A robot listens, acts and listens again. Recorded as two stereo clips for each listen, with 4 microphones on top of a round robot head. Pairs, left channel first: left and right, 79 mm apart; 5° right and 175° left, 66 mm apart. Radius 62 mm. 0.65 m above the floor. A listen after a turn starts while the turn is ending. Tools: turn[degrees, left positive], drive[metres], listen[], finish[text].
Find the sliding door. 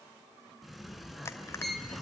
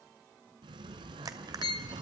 Thought: The sliding door: straight behind.
Action: turn[180]
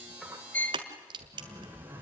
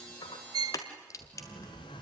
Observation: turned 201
Thought: The sliding door is now 20° right.
Action: turn[-20]
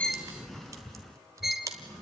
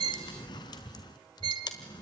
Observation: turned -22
Action: finish[Found it: a sliding door, straight ahead, 1 to 2 m away.]